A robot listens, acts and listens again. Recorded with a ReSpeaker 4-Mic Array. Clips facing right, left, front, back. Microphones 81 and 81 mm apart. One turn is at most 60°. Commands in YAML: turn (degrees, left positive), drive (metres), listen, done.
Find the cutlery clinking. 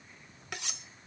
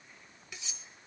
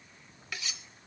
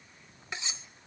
turn: -60
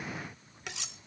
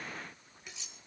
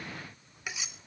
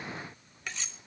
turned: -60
turn: -60
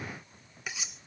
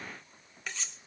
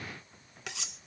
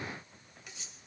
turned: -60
turn: -10
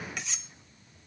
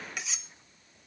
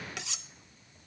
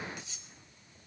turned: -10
done: "Found it: cutlery clinking, straight ahead, 1 to 2 m away."